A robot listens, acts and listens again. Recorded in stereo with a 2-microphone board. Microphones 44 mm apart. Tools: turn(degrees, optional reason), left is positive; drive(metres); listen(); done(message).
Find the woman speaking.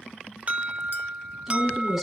turn(degrees=-30)
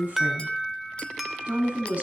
turn(degrees=-155, reason="So it is at 155° right.")
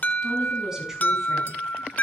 listen()
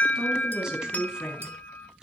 turn(degrees=-20, reason="The woman speaking is now 20° right.")
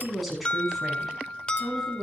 done("Facing the woman speaking, over 4 m away.")